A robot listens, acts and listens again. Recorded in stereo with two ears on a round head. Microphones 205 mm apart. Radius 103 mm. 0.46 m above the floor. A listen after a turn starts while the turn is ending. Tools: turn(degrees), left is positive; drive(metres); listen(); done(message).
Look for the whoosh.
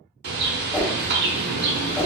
turn(degrees=30)
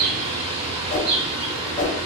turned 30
turn(degrees=140)
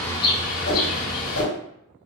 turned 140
turn(degrees=65)
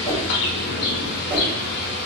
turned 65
listen()
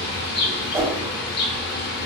turn(degrees=-15)
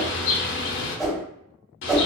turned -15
done("Found it: a whoosh, straight ahead.")